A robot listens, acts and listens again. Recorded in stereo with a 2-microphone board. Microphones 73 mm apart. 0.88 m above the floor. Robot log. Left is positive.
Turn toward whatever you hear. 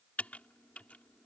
note: The typing on a keyboard: about 20° left or 160° left.
cmd yaw +20
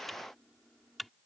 end: Found it: typing on a keyboard, straight ahead.